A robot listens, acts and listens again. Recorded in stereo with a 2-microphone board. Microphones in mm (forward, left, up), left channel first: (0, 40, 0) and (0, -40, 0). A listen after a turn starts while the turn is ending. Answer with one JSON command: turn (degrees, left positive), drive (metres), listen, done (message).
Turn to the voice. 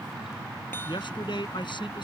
{"turn": 75}
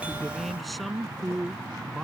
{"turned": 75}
{"done": "Found it: a man speaking, straight ahead."}